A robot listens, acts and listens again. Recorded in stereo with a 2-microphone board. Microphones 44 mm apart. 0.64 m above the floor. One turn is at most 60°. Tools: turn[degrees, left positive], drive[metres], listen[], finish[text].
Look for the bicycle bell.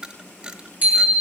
Thought: The bicycle bell: about 35° right or 145° right.
Action: turn[-35]
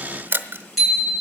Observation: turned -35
Action: finish[Found it: a bicycle bell, straight ahead, over 4 m away.]